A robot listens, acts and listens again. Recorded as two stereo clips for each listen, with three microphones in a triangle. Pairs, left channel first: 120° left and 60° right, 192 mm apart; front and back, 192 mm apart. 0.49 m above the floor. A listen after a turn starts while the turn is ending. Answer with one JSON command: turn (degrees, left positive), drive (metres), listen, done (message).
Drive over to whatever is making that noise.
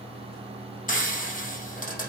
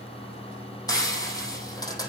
{"turn": 70}
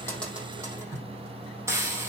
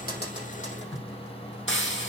{"turn": 15}
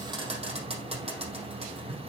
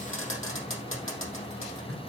{"drive": 1.0}
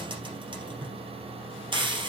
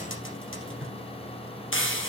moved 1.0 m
{"drive": 1.0}
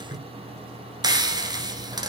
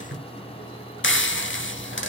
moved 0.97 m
{"turn": 10}
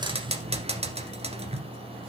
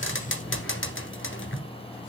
{"drive": 1.0}
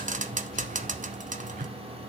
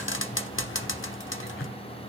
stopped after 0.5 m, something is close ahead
{"turn": -10}
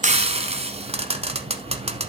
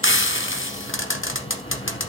{"done": "I am next to the frying."}